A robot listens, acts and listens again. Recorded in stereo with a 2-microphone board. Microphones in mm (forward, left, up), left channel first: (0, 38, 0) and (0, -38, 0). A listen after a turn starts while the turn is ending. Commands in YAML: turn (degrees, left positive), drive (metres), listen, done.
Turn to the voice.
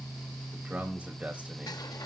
turn: -15
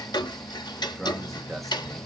done: "Found it: a man speaking, straight ahead."